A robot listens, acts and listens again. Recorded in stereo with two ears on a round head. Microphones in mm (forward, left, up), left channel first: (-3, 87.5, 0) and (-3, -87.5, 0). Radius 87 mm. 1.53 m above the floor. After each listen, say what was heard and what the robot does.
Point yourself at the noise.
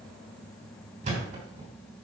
The thud: about 35° right or 145° right. Turn 35° right.
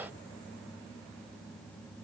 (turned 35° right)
Keep listening.
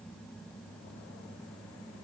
I heard a thud, but can't make it out now. It was about straight ahead or 110° right.